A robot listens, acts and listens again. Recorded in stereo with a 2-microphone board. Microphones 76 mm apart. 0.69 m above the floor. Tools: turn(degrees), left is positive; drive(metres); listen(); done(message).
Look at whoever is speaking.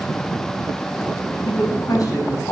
turn(degrees=60)
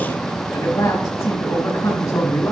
turn(degrees=55)
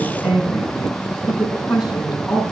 done("Found it: a woman speaking, straight ahead.")